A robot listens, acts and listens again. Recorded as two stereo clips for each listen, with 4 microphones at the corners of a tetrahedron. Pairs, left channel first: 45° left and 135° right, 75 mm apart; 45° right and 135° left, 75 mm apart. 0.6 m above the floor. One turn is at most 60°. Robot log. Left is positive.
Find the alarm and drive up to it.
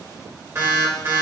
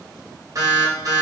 note: The alarm: 170° left.
cmd yaw +60
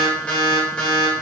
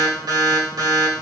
note: The alarm is now 120° left.
cmd yaw +60
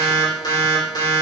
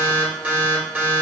note: The alarm is now 70° left.
cmd yaw +60
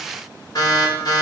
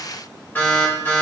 note: The alarm is now 20° left.
cmd yaw +20
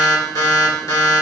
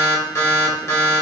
cmd fwd 1.0
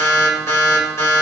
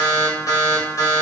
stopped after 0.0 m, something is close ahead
end: Something is in my way. I am facing the alarm but have not reached it.